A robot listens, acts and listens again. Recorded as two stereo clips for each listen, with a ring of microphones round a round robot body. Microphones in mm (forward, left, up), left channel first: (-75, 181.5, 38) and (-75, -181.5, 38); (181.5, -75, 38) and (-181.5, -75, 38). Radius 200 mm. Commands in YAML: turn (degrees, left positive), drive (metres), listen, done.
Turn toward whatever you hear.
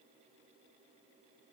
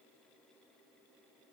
listen: true
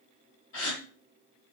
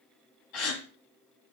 turn: 30
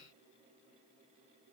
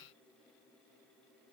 done: "Facing where the gasp came from. I can't hear it now."